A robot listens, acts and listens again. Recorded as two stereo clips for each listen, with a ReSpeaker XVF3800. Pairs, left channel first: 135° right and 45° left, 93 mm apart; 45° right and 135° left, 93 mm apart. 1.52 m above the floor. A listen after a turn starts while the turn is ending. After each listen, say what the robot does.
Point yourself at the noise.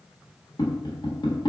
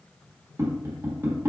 Turn 165° right.
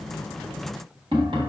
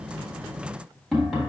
Turn 40° left.
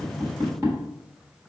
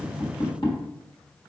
Turn 15° right.
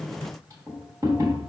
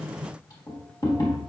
Found it: tapping, straight ahead, 1 to 2 m away.